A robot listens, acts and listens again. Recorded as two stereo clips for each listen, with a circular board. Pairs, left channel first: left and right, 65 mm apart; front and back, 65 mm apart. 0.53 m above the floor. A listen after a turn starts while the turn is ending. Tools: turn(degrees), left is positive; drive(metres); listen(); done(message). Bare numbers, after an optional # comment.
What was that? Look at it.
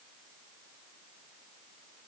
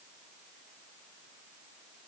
listen()
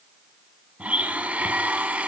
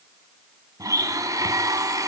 # The blender: 160° right.
turn(-160)
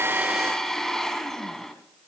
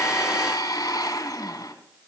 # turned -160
done("Found it: a blender, straight ahead.")